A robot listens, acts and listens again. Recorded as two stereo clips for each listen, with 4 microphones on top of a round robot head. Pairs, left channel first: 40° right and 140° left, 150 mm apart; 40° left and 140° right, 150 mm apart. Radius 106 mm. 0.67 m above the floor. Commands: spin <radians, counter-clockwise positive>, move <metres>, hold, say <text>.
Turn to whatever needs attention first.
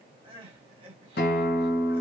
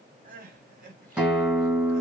spin -2.88
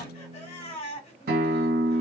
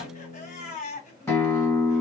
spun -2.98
say Facing the crying.